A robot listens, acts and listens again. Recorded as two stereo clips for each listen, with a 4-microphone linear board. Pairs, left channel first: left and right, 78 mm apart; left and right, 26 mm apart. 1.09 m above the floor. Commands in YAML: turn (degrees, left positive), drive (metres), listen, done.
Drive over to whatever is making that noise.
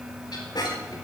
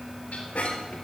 turn: 65
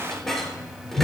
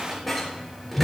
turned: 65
drive: 1.0
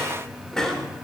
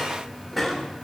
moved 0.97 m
drive: 1.0
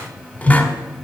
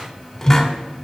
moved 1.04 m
turn: 20
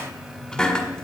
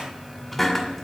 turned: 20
turn: 10
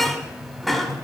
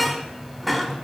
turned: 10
drive: 1.0
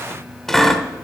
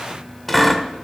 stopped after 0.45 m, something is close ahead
done: "Arrived at the squeak, straight ahead."